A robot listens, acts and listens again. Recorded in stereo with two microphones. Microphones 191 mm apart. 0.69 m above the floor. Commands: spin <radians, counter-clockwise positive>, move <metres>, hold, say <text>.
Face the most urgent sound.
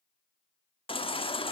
spin 0.52
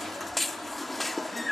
say Facing the baby crying.